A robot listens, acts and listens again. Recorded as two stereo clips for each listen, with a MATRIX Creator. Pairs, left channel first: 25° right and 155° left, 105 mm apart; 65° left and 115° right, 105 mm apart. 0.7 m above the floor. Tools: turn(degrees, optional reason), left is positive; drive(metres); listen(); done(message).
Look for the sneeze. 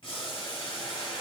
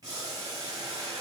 listen()
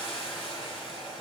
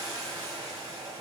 listen()
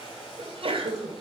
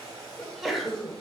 turn(degrees=160, reason="The sneeze: 160° left.")
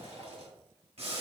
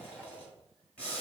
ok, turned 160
done("Facing where the sneeze came from. I can't hear it now.")